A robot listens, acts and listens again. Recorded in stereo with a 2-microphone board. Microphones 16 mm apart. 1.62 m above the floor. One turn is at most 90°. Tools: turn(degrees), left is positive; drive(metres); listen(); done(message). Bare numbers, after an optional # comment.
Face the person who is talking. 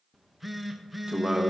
# The man speaking: about 55° right or 125° right.
turn(-55)
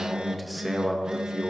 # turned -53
# So it is at 10° right.
turn(-10)
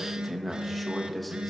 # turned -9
done("Found it: a man speaking, straight ahead, 1 to 2 m away.")